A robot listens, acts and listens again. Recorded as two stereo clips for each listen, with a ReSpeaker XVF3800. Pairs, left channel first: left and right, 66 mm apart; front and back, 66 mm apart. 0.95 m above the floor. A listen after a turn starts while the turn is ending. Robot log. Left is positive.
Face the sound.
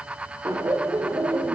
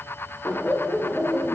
note: The laughter: 80° right.
cmd yaw -80
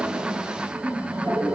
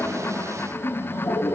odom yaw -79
note: The laughter is now 25° right.
cmd yaw -25
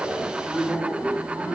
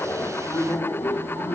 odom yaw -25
note: The laughter is now 15° right.
cmd yaw -15
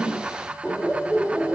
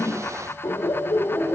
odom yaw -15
note: The laughter is now 10° right.
cmd yaw -10
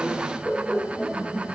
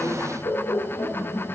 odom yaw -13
end: Facing the laughter, 2 to 4 m away.